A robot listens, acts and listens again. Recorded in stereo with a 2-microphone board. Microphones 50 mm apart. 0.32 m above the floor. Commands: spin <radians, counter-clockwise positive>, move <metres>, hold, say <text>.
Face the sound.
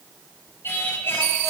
spin 0.87
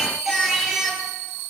say Facing the singing, over 4 m away.